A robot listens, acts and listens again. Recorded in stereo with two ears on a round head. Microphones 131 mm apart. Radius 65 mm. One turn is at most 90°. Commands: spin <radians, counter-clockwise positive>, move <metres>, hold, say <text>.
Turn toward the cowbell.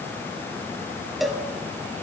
spin 0.52
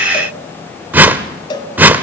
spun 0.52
spin 1.57
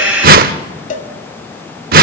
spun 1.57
spin 0.96
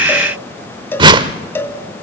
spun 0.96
spin 0.26
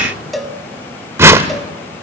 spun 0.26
say Facing the cowbell.